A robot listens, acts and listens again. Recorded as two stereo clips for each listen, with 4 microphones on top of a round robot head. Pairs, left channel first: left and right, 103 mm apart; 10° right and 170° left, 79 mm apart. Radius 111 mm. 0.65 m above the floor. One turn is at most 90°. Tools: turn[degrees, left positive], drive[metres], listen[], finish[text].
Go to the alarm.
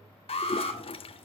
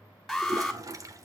Thought: The alarm: 80° left.
Action: turn[80]
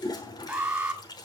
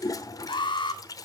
Thought: The alarm is now 10° right.
Action: turn[-10]
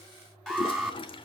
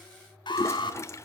Action: drive[1.0]
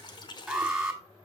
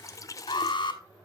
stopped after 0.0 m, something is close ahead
Action: finish[Something is in my way. I am facing the alarm but have not reached it.]